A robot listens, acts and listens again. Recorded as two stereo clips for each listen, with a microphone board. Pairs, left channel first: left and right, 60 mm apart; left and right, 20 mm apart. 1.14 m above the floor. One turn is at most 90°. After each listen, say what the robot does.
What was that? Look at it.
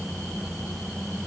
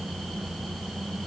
Keep listening.
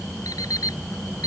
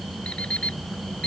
Turn 90° left.
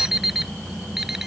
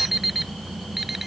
Found it: an alarm clock, straight ahead.